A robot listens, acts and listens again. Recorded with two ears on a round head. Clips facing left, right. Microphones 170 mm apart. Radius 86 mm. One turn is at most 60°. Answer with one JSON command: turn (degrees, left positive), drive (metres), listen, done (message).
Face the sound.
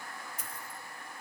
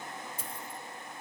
{"turn": -30}
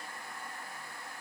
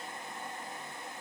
{"listen": true}
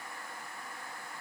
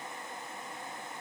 {"done": "I heard a dropped coin, but can't make it out now. It was about straight ahead or 120° right."}